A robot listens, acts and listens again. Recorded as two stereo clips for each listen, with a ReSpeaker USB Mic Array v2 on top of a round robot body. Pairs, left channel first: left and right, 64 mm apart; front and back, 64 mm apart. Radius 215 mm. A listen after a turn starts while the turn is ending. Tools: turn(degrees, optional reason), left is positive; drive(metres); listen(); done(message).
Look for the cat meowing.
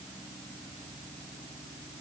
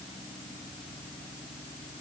listen()
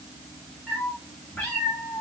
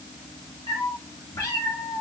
turn(degrees=20, reason="The cat meowing: 20° left.")
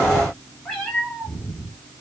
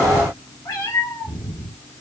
turn(degrees=20, reason="The cat meowing is now 20° left.")
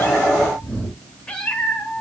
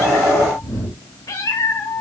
turn(degrees=15, reason="The cat meowing is now 15° left.")
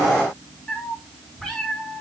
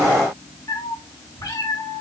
done("Facing the cat meowing.")